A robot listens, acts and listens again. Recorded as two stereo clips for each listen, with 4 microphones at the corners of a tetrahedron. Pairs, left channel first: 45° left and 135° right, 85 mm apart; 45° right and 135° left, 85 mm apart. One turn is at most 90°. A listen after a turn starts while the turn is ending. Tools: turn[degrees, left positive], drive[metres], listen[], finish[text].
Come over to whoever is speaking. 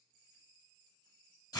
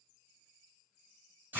Action: listen[]
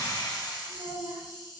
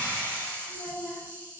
Thought: The child speaking: 120° right.
Action: turn[-90]
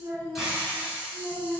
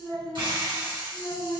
Thought: The child speaking is now 35° right.
Action: turn[-35]
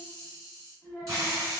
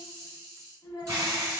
Thought: The child speaking is now 15° right.
Action: turn[-15]
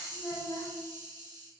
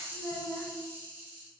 Action: drive[1.0]
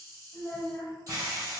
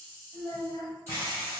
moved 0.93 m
Action: drive[1.0]
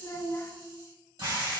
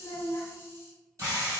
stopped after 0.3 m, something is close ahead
Action: finish[I am next to the child speaking.]